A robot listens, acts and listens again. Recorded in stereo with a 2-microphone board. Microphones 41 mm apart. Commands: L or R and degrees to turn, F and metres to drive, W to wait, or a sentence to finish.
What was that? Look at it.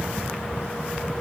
W
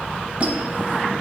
R40
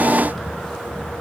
W
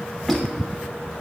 W
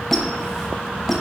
Facing the squeak.